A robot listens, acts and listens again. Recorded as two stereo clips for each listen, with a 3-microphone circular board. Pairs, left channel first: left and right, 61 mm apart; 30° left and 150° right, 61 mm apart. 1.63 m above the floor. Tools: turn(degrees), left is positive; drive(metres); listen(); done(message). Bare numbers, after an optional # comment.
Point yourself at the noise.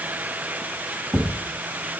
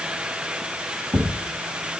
# The thud: 160° right.
turn(-160)
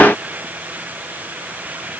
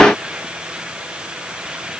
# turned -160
done("Facing where the thud came from. I can't hear it now.")